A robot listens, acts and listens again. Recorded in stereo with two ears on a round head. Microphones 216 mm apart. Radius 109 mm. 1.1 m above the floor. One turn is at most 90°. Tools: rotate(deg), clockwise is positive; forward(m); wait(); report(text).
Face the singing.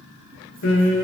rotate(-55)
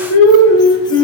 rotate(-70)
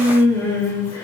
rotate(-10)
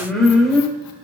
report("Found it: singing, straight ahead.")